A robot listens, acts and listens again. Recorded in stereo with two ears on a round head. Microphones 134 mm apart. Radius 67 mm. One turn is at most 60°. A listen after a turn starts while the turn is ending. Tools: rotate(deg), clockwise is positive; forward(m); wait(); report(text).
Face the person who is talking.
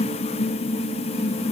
wait()
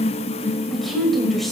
rotate(-30)
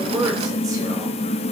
wait()
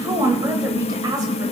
rotate(30)
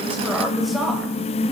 report("Found it: a woman speaking, straight ahead.")